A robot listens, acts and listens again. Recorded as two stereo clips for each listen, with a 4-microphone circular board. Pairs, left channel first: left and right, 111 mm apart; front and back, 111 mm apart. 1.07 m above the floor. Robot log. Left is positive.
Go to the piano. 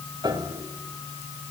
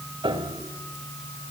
note: The piano: 140° right.
cmd yaw -140
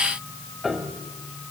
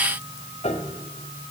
cmd fwd 1.0
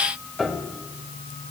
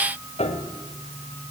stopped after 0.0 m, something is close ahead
end: Something is in my way. I am facing the piano but have not reached it.